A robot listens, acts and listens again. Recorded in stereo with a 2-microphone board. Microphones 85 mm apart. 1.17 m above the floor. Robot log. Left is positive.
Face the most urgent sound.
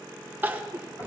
note: The crying: about 25° right or 155° right.
cmd yaw -25
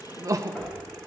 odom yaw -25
note: So it is at 130° right.
cmd yaw -130
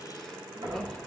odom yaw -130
cmd idle
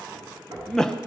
end: Found it: crying, straight ahead.